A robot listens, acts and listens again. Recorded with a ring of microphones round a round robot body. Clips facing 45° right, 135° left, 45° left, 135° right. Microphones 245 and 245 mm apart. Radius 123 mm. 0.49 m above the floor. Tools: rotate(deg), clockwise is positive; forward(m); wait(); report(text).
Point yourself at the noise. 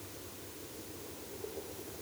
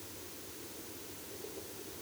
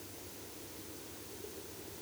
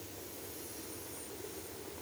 wait()
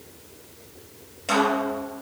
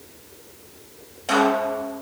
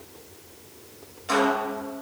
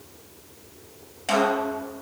rotate(120)
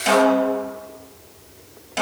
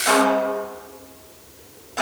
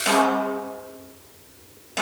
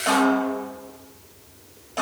report("Found it: a snare drum, straight ahead.")